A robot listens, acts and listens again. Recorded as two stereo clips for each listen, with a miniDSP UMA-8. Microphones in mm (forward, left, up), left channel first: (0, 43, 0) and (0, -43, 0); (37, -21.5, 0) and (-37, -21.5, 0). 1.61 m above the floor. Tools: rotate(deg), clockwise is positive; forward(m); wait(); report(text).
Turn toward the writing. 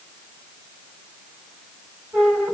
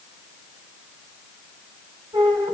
wait()
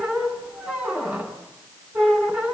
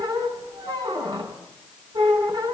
wait()
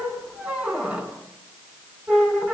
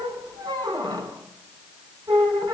report("I can't make out writing, only a squeak.")